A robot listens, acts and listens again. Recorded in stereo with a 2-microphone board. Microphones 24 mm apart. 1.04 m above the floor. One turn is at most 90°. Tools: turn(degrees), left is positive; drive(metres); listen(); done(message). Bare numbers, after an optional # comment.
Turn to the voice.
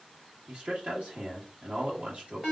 # The man speaking: about 55° right or 125° right.
turn(-55)
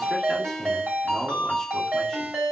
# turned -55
listen()
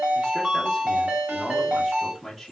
done("Facing the man speaking, 1 to 2 m away.")